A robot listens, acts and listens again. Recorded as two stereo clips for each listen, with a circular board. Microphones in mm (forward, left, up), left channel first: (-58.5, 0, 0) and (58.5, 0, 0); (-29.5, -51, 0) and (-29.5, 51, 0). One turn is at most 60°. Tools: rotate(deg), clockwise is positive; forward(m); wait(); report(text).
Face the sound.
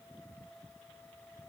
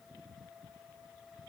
wait()
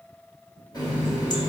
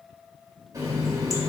rotate(-60)
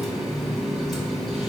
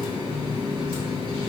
rotate(-60)
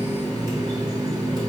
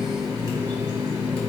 rotate(-50)
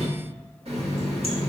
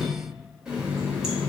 rotate(-10)
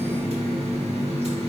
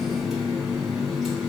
report("Facing the running tap, 1 to 2 m away.")